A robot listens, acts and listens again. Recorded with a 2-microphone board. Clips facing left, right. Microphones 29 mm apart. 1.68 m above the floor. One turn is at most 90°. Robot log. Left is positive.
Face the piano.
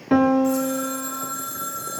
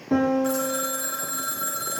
note: The piano: about 40° left or 140° left.
cmd yaw +40
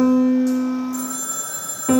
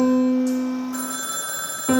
end: Facing the piano.